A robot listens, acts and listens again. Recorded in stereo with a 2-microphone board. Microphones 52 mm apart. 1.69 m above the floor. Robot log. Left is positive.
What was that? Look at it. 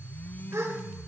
note: The gasp: about 75° right or 105° right.
cmd yaw -75
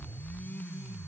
cmd idle
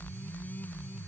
end: I heard a gasp, but can't make it out now. It was about straight ahead or 30° right.